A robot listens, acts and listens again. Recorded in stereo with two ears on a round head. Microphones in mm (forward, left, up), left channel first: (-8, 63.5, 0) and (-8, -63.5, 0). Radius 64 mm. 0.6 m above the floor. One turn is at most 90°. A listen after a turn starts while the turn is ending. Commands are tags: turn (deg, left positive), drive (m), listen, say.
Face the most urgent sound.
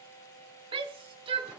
<turn deg="-40"/>
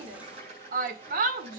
<turn deg="-90"/>
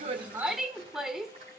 <say>Found it: a shout, straight ahead.</say>